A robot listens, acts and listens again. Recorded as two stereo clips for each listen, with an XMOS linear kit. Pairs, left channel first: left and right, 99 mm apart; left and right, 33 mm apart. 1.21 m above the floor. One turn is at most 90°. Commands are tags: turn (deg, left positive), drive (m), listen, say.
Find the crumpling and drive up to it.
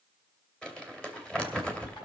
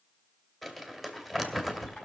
<turn deg="30"/>
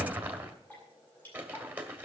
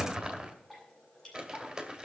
<turn deg="-20"/>
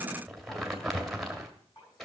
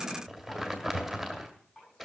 <drive m="1.0"/>
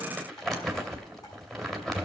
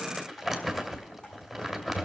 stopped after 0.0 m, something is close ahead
<say>Something is in my way. I am facing the crumpling but have not reached it.</say>